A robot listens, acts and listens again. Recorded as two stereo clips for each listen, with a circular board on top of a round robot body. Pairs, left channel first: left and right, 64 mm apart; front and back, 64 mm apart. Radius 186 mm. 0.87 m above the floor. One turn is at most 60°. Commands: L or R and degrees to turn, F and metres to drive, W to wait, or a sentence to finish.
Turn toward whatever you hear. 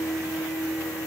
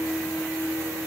W
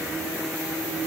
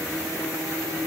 W
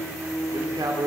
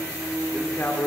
R60
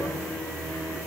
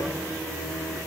R10
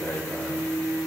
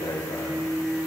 L10
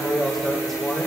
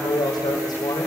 Facing the man speaking.